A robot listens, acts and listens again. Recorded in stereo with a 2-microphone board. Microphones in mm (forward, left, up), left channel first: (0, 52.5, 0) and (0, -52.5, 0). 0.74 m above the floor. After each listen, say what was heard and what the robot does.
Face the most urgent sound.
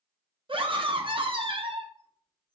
The scream: about 50° right or 130° right. Turn 50° right.
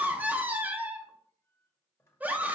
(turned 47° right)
So it is at 15° right. Turn 15° right.
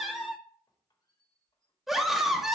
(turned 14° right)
Found it: a scream, straight ahead, under 1 m away.